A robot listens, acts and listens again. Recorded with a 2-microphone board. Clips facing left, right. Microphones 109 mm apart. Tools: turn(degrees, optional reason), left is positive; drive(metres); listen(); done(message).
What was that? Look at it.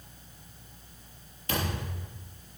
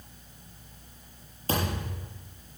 turn(degrees=-35, reason="The thud: about 35° right or 145° right.")
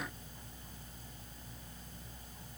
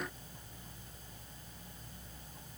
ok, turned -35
listen()
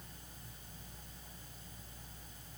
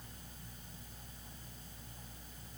done("I heard a thud, but can't make it out now. It was about straight ahead or 110° right.")